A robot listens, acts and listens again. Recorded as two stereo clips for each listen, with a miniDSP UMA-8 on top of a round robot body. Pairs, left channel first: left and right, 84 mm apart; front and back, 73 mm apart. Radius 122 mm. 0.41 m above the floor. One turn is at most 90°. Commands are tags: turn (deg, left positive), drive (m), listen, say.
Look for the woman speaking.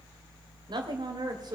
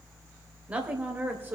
<turn deg="-90"/>
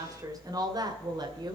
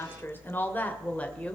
<turn deg="-70"/>
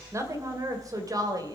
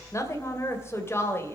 <turn deg="-55"/>
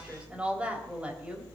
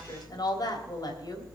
<turn deg="-15"/>
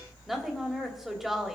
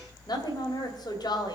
<say>Found it: a woman speaking, straight ahead.</say>